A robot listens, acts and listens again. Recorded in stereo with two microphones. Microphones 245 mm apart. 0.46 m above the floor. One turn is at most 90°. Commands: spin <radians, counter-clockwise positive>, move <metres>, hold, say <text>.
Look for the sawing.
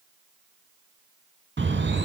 hold
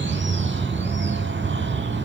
hold
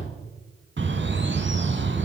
say I can't make out sawing to turn to.